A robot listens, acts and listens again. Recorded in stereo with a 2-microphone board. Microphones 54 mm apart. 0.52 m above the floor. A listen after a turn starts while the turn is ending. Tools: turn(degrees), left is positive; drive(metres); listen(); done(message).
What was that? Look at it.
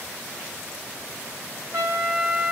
turn(degrees=-60)
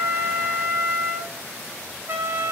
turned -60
turn(degrees=-50)
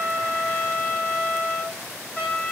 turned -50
turn(degrees=25)
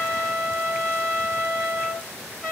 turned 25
done("Found it: a trumpet, straight ahead.")